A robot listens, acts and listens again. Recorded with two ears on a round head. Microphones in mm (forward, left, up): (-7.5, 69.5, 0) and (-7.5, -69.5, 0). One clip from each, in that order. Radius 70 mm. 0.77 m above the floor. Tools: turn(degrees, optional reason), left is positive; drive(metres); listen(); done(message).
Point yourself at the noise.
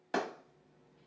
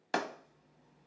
turn(degrees=-45, reason="The clap: about 45° right or 135° right.")
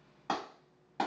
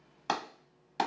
turn(degrees=-80, reason="So it is at 80° right.")
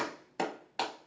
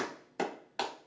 done("Found it: a clap, straight ahead, under 1 m away.")